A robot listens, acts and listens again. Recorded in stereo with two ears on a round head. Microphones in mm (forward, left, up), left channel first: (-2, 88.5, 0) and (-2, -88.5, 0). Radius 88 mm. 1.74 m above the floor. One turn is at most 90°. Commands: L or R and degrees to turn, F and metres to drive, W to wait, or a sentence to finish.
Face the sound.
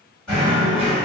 L30
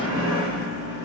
R25
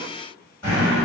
L15
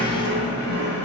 Facing the knocking.